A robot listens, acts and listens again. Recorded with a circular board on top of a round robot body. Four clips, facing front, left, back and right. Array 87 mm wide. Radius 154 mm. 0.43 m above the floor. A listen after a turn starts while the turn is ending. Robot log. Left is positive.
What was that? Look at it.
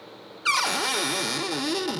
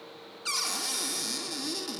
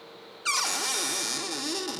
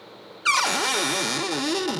note: The cupboard door: 65° right.
cmd yaw -65
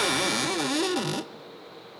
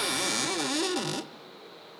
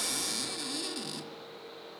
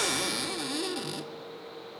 note: The cupboard door is now 20° left.
cmd yaw +20
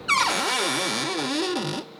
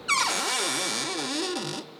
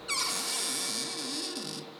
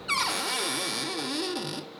note: The cupboard door is now 10° left.
cmd yaw +10
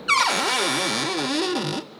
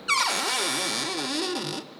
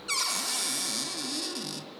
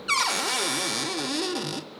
end: Facing the cupboard door, under 1 m away.